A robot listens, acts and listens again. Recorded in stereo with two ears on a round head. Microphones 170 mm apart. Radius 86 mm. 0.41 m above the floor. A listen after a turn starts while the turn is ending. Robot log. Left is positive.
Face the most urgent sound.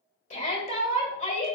note: The shout: about 35° left or 145° left.
cmd yaw +35
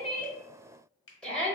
end: Found it: a shout, straight ahead, 1 to 2 m away.